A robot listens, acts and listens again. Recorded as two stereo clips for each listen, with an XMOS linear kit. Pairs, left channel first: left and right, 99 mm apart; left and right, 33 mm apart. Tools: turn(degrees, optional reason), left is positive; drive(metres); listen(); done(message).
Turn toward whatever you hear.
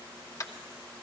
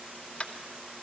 turn(degrees=35, reason="The tapping: about 35° left or 145° left.")
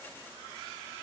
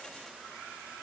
listen()
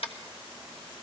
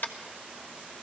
turn(degrees=110, reason="So it is at 110° left.")
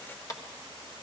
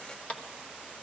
turn(degrees=35, reason="The tapping is now 35° left.")
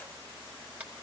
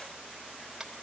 listen()
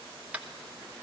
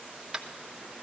turn(degrees=-15, reason="The tapping is now 15° right.")
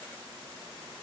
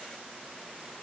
listen()
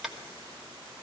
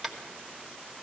done("Found it: tapping, straight ahead.")